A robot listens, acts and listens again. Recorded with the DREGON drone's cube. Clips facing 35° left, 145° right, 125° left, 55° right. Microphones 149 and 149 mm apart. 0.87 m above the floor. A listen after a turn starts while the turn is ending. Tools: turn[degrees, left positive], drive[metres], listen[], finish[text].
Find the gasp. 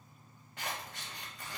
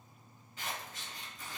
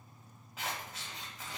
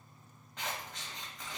Action: listen[]
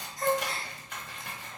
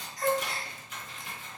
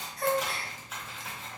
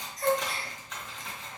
Thought: The gasp: 100° left.
Action: turn[100]
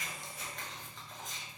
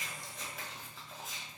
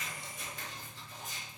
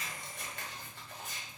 Action: finish[I heard a gasp from this way, but can't make it out now.]